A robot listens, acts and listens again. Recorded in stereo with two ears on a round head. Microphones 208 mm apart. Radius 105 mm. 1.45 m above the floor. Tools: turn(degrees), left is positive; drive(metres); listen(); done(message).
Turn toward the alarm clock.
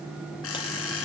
turn(degrees=65)
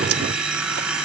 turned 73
done("Found it: an alarm clock, straight ahead, over 4 m away.")